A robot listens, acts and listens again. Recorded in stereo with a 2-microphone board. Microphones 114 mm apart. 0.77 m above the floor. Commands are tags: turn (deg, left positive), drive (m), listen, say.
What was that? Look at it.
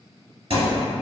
<turn deg="-60"/>
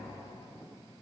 <listen/>
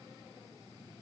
<say>I heard a thud, but can't make it out now. It was about straight ahead or 60° right.</say>